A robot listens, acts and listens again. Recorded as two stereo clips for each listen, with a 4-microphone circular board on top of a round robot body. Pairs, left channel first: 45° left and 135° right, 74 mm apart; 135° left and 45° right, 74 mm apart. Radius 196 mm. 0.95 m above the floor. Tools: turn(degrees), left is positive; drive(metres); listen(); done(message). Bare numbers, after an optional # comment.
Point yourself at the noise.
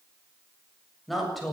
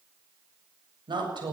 # The woman speaking: 45° right.
turn(-45)
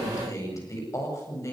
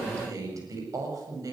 done("Facing the woman speaking.")